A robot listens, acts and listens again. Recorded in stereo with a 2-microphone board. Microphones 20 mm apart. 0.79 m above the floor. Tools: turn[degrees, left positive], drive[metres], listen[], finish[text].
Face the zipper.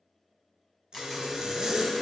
Thought: The zipper: about 45° right or 135° right.
Action: turn[-45]
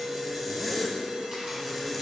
Action: finish[Found it: a zipper, straight ahead, 1 to 2 m away.]